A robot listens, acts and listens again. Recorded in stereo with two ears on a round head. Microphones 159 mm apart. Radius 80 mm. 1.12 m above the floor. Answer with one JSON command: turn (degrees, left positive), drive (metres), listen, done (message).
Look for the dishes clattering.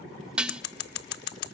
{"turn": -30}
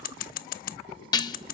{"turn": 25}
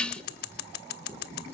{"done": "Found it: dishes clattering, straight ahead, under 1 m away."}